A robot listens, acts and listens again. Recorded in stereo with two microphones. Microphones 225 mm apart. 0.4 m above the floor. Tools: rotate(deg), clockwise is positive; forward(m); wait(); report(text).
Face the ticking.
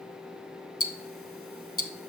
rotate(-75)
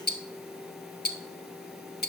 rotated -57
rotate(-45)
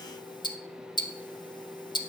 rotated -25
rotate(-20)
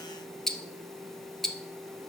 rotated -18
report("Found it: ticking, straight ahead.")